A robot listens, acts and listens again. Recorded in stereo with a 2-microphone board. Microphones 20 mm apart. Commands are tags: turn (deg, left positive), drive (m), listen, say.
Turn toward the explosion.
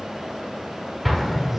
<turn deg="30"/>
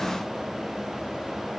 <listen/>
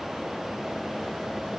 <say>I heard an explosion, but can't make it out now. It was about 30° right or 150° left.</say>